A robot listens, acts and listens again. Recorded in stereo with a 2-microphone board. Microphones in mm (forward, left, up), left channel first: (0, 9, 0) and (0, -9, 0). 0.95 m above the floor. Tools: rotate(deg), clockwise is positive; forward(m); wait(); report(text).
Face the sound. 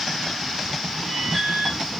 rotate(-30)
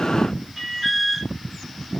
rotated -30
rotate(20)
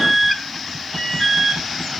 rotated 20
report("Found it: an alarm, straight ahead.")